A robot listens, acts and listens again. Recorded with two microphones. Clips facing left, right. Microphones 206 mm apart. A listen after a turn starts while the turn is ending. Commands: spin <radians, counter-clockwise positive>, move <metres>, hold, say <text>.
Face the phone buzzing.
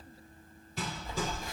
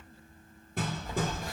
spin -0.35
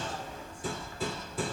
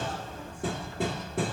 hold
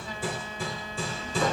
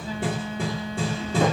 spin -2.44
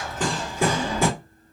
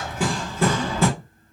hold
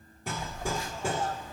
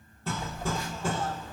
spin -0.35
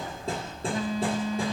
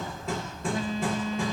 say Found it: a phone buzzing, straight ahead.